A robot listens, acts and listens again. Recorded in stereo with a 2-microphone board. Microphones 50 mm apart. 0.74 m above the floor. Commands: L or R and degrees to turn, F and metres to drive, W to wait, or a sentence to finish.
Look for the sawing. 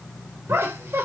W
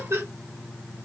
W
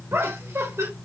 I can't make out sawing to turn to.